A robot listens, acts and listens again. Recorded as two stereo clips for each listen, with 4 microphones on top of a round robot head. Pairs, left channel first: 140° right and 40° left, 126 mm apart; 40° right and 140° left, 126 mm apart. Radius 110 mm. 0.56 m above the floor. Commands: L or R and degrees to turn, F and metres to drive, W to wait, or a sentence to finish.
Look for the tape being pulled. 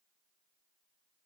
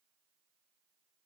W
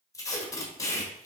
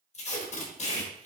R70
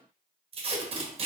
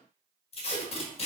Facing the tape being pulled.